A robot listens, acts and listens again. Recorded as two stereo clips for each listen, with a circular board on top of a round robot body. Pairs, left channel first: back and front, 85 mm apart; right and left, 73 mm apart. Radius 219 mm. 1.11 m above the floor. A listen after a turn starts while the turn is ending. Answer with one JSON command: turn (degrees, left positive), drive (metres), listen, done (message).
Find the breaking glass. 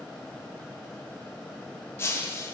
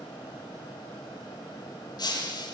{"turn": -115}
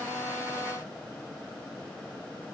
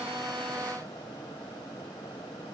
{"done": "Facing where the breaking glass came from. I can't hear it now."}